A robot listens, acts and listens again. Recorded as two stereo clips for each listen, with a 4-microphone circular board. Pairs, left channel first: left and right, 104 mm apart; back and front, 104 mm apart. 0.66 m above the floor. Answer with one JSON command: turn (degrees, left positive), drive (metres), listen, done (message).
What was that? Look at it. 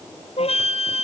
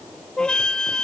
{"turn": 100}
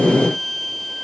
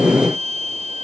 {"done": "Facing the flute."}